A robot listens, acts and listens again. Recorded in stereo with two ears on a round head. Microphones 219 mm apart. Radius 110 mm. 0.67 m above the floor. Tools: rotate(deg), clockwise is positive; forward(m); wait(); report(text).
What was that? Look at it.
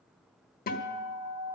rotate(-40)
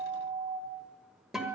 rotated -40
report("Facing the guitar, 1 to 2 m away.")